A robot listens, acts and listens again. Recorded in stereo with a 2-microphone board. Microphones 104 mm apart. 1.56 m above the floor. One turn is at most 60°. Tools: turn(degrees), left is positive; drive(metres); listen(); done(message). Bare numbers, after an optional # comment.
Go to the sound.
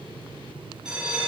turn(-30)
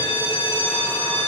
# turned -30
# So it is at 25° left.
turn(25)
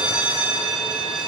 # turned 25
# The bell is now 10° right.
turn(-10)
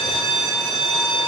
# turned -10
drive(1.0)
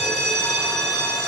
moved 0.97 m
drive(1.0)
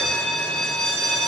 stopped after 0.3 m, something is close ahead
done("I am next to the bell.")